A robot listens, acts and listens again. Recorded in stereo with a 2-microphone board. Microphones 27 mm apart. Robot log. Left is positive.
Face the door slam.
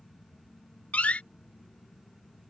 note: The door slam: about 55° left or 125° left.
cmd yaw +55
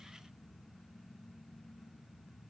cmd idle
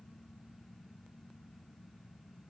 end: I heard a door slam, but can't make it out now. It was about straight ahead or 70° left.